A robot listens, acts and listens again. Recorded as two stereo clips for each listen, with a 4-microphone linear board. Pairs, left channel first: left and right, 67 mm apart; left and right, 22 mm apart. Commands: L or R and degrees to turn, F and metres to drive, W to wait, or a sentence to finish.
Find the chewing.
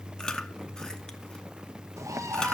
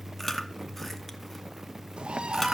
L30
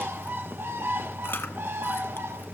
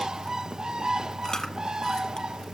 L140
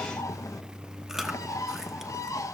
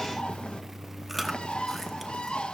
Facing the chewing, 1 to 2 m away.